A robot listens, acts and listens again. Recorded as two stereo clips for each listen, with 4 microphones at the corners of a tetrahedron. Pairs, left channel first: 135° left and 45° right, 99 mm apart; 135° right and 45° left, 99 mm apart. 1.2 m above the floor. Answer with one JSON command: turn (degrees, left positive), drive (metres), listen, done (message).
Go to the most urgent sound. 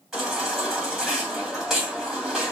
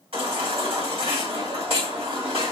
{"turn": 40}
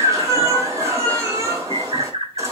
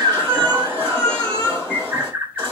{"turn": 15}
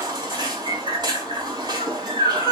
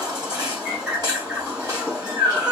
{"drive": 1.0}
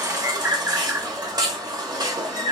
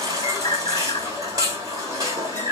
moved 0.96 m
{"drive": 1.0}
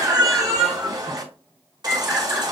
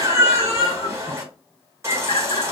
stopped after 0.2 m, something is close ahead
{"done": "I am next to the baby crying."}